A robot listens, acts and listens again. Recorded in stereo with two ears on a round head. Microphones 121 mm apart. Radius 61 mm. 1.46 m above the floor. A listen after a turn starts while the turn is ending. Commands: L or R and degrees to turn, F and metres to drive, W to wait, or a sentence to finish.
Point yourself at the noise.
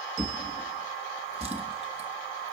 R50
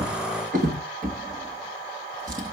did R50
R75
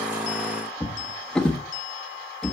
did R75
Facing the drawer.